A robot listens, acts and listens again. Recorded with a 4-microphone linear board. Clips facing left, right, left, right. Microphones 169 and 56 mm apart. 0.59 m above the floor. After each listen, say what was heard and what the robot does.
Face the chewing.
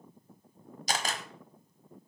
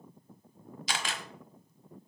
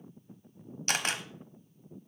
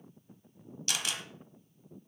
Keep listening.
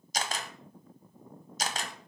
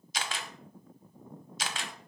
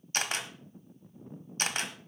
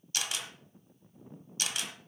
Keep listening.
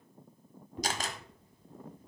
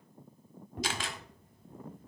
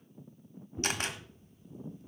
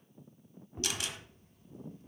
The chewing: about 55° right or 125° right. Turn 55° right.
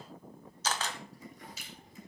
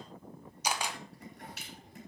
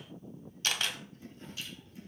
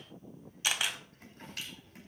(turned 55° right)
So it is at 70° right. Turn 70° right.
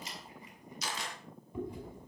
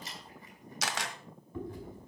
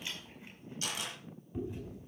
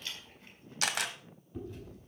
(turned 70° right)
The chewing is now 15° left. Turn 15° left.
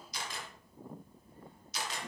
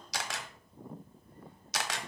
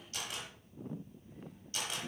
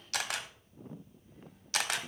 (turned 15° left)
Keep listening.
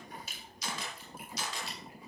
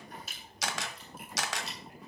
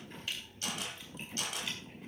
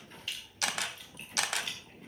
Found it: chewing, straight ahead.